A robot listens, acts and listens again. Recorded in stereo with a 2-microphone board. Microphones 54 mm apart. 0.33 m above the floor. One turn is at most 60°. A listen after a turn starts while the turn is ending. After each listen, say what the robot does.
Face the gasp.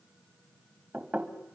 Keep listening.
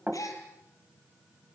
Turn 60° left.
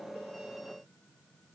Turn 30° left.
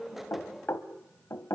Facing where the gasp came from. I can't hear it now.